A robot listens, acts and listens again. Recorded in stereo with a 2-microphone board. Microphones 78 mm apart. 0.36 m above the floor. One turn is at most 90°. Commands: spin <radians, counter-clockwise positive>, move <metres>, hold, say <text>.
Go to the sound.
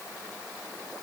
hold
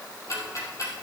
spin 0.79
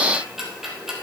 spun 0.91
move 1.0
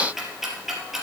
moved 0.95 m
move 1.0
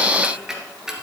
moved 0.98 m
spin -0.17
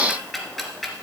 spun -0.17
move 1.0
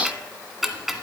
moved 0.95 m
move 1.0
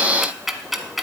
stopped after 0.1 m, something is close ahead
say I am next to the ticking.